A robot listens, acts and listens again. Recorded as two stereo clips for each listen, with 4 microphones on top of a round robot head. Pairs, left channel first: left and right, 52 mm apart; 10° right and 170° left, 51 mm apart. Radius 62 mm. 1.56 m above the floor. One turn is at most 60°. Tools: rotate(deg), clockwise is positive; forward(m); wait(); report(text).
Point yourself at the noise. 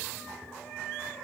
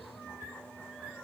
wait()
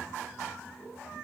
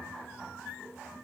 wait()
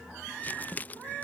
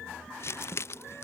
rotate(-25)
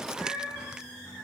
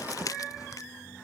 rotate(15)
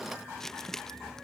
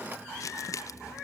report("Found it: crumpling, straight ahead.")